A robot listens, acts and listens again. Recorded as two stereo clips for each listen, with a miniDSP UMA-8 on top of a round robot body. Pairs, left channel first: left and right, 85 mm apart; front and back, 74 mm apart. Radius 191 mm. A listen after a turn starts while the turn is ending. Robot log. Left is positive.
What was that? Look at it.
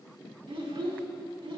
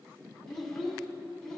note: The child speaking: 85° right.
cmd yaw -85
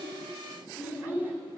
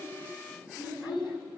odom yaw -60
note: The child speaking is now 20° right.
cmd yaw -20
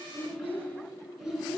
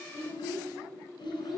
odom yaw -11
end: Facing the child speaking, over 4 m away.